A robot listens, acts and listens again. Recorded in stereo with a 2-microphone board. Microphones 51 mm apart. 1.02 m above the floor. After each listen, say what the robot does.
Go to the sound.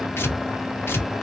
Turn 45° left.
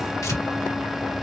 Turn 90° left.
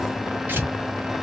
Turn 40° right.
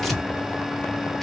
Drive 1.0 m forward.
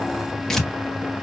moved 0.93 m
Drive 1.0 m forward.
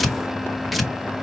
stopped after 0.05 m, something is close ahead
I am next to the tearing paper.